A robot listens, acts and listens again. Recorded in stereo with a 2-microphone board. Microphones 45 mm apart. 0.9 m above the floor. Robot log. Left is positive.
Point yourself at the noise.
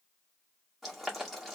cmd yaw +30
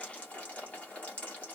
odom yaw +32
note: So it is at 150° left.
cmd yaw +150
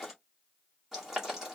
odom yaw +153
end: Facing the boiling.